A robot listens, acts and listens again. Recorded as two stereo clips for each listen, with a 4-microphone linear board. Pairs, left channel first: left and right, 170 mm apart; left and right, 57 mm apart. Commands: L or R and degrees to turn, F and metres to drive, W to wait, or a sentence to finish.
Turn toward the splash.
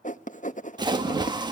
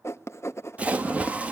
R25
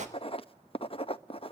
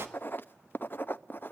R125
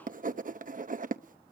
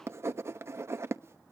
Facing where the splash came from. I can't hear it now.